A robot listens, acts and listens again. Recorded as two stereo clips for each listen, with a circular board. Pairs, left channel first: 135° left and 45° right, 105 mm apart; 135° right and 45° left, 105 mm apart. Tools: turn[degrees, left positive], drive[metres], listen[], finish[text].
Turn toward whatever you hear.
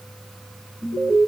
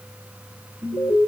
Thought: The alarm: 105° right.
Action: turn[-105]
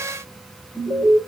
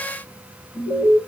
Action: finish[Found it: an alarm, straight ahead.]